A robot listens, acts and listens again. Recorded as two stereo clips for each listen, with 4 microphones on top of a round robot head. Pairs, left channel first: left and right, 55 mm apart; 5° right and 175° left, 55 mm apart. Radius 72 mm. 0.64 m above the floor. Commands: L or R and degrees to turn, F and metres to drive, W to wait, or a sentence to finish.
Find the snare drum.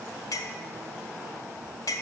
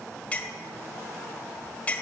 W
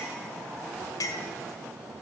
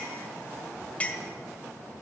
W
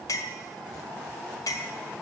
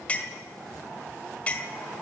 I can't make out a snare drum to turn to.